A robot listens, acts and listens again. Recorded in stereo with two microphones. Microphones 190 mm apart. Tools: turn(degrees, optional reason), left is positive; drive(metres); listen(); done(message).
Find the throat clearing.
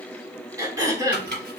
turn(degrees=-15, reason="The throat clearing: about 15° right or 165° right.")
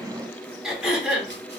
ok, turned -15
done("Found it: throat clearing, straight ahead, under 1 m away.")